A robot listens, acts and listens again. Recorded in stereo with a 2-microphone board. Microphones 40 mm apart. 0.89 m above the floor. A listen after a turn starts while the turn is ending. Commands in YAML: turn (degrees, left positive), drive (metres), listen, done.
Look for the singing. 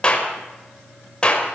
listen: true
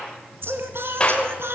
turn: -90
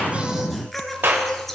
turn: 10
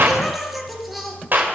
done: "Found it: singing, straight ahead."